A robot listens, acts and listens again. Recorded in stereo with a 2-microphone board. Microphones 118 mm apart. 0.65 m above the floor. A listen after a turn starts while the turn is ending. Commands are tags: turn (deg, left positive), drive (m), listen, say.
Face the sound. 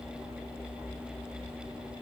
<listen/>
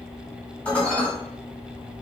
<turn deg="30"/>
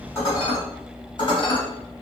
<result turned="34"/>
<turn deg="135"/>
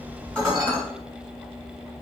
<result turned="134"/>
<say>Found it: dishes clattering, straight ahead, 1 to 2 m away.</say>